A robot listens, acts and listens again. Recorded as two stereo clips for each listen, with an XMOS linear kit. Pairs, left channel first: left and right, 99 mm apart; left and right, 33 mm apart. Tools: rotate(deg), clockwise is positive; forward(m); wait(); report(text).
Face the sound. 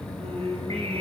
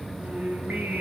rotate(90)
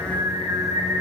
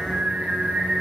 rotate(35)
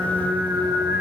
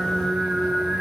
rotate(20)
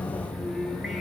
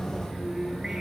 report("Found it: singing, straight ahead, over 4 m away.")